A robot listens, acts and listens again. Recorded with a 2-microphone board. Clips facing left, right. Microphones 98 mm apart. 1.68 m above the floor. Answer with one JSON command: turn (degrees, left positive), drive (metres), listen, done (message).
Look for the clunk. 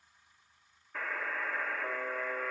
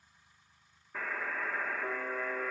{"listen": true}
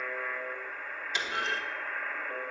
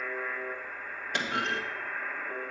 {"turn": -55}
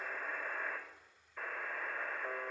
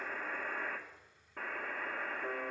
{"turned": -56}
{"listen": true}
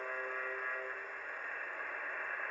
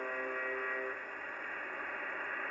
{"done": "I heard a clunk, but can't make it out now. It was about straight ahead or 65° right."}